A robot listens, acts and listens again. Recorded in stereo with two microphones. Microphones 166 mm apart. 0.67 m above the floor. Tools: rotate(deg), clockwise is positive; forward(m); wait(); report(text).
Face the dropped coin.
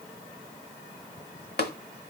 wait()
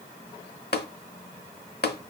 wait()
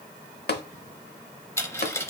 rotate(-15)
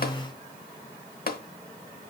wait()
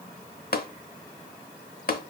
report("I heard a dropped coin, but can't make it out now. It was about straight ahead or 150° left.")